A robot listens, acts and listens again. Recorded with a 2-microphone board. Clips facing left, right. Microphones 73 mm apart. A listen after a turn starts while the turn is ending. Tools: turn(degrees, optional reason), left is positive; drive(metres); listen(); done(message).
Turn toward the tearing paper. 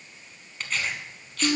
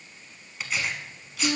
turn(degrees=-30)
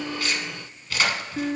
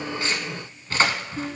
turn(degrees=-145, reason="So it is at 145° right.")
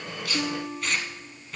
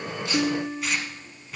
done("Found it: tearing paper, straight ahead.")